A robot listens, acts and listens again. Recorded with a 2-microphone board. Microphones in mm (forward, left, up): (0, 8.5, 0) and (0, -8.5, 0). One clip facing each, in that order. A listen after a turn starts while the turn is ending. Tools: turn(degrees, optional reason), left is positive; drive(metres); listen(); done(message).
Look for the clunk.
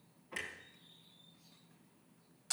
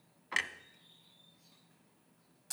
turn(degrees=-90)
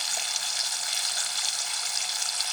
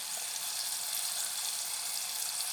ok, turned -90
done("I heard a clunk from this way, but can't make it out now.")